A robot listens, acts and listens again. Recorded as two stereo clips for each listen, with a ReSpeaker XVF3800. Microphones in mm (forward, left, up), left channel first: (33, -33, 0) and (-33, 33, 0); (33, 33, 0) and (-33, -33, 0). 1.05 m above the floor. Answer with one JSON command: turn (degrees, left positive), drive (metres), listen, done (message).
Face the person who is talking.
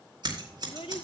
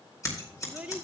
{"turn": -60}
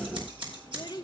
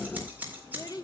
{"done": "Facing the child speaking."}